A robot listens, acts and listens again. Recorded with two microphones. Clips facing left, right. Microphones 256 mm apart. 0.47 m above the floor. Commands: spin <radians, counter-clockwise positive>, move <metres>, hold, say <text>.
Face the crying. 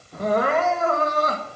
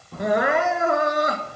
spin -0.52
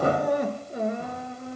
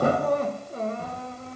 spin 0.26
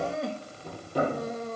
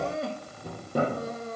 say Found it: crying, straight ahead, under 1 m away.